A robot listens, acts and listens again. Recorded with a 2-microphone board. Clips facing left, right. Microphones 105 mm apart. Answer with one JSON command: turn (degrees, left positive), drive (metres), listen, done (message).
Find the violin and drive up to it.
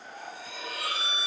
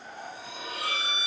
{"turn": -90}
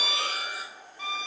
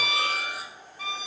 {"drive": 1.0}
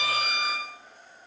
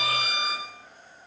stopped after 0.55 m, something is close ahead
{"done": "Something is in my way. I am facing the violin but have not reached it."}